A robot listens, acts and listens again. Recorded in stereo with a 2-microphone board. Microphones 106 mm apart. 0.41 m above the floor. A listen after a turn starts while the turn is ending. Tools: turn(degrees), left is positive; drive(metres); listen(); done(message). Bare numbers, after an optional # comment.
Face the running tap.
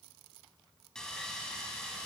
listen()
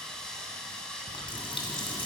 # The running tap: about 50° left or 130° left.
turn(50)
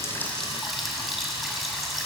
done("Found it: a running tap, straight ahead, 1 to 2 m away.")